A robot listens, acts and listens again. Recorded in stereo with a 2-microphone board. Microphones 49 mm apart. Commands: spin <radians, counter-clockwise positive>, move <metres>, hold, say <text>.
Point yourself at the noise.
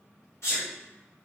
spin 1.13
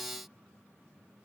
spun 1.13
hold
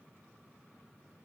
say I heard a sneeze, but can't make it out now. It was about straight ahead or 50° left.